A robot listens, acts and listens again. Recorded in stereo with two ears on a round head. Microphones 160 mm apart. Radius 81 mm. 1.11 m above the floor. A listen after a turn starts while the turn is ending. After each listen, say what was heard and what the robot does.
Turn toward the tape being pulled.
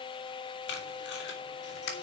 The tape being pulled: about 70° left or 110° left. Turn 70° left.
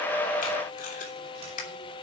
So it is at 40° left. Turn 40° left.
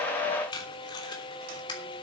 The tape being pulled is now 25° left. Turn 25° left.
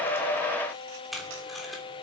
Found it: tape being pulled, straight ahead.